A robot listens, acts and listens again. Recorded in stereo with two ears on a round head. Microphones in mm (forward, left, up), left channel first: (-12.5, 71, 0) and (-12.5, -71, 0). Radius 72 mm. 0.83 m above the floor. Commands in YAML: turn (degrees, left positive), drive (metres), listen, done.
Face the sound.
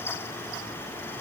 listen: true
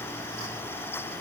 listen: true
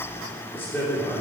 turn: 30
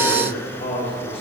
turn: 135
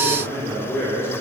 turn: 15
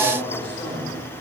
turn: 10
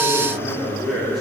done: "Found it: a man speaking, straight ahead."